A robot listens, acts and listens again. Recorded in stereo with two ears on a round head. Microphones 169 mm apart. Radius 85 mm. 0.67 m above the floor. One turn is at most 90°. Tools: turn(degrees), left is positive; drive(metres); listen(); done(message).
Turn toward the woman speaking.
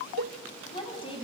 turn(degrees=30)
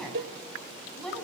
done("Facing the woman speaking.")